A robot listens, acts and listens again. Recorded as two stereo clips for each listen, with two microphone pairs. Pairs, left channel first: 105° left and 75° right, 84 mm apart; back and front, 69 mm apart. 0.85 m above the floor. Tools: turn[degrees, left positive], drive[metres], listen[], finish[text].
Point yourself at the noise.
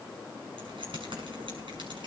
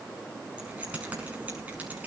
Thought: The keys jangling: 65° right.
Action: turn[-65]
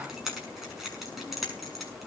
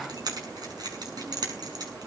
Thought: The keys jangling is now 15° left.
Action: turn[15]
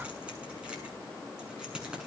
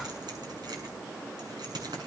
Action: finish[Found it: keys jangling, straight ahead.]